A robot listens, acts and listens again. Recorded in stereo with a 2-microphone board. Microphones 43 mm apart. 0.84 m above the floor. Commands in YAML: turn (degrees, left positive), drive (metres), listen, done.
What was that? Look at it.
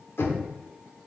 turn: 90
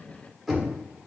done: "Facing the knocking, 1 to 2 m away."